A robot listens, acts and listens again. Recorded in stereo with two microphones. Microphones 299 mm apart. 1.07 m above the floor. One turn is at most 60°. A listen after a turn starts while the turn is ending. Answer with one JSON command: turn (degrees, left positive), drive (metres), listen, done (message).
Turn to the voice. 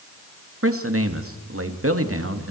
{"turn": -50}
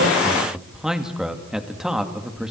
{"done": "Facing the man speaking, 2 to 4 m away."}